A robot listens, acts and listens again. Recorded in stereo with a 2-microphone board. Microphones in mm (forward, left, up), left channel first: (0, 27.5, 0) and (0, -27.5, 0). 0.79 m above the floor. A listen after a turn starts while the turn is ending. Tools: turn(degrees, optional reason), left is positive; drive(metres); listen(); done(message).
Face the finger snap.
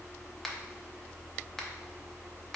turn(degrees=30)
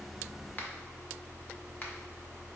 turn(degrees=145, reason="So it is at 145° left.")
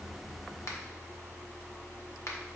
turn(degrees=70, reason="The finger snap is now 70° left.")
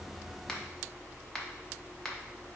turn(degrees=10, reason="The finger snap is now 10° left.")
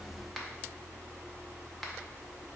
done("Facing the finger snap.")